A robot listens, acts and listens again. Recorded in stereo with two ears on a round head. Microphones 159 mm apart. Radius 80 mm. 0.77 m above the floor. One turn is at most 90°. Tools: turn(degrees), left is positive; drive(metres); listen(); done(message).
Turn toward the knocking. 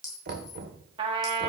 turn(degrees=-60)
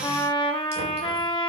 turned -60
listen()
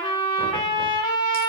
listen()
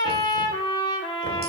done("I heard knocking, but can't make it out now. It was about straight ahead or 60° right.")